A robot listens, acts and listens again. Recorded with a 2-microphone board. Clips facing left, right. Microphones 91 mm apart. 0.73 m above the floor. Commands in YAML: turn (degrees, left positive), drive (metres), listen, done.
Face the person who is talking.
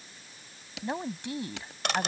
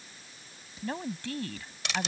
turn: 20
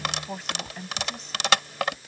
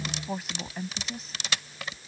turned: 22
done: "Facing the woman speaking."